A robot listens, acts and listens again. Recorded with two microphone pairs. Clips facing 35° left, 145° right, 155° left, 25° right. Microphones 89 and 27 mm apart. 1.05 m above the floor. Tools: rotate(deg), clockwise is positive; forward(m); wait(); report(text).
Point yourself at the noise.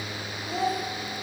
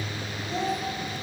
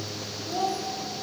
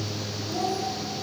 rotate(-120)
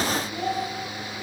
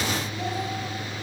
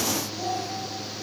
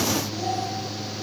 wait()
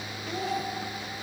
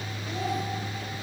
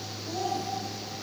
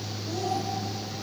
wait()
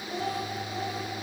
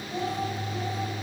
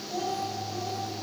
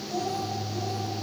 rotate(-90)
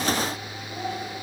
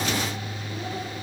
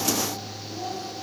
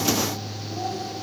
wait()
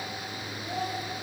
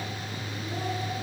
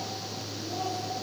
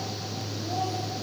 wait()
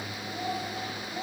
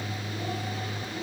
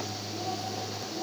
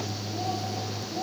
report("Facing where the child speaking came from. I can't hear it now.")